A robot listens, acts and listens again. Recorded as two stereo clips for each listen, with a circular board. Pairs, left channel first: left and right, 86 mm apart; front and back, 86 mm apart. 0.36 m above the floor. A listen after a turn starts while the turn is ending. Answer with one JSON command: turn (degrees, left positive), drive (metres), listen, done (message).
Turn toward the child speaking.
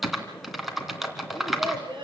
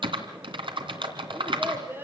{"turn": -115}
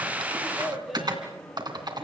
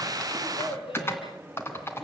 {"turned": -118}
{"done": "Found it: a child speaking, straight ahead, over 4 m away."}